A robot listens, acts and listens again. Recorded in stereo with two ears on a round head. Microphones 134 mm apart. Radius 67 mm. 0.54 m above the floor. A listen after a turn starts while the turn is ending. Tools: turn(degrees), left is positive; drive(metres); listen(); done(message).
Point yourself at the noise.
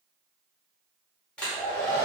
turn(degrees=30)
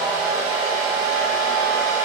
turn(degrees=-25)
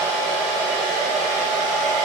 done("Facing the hair dryer.")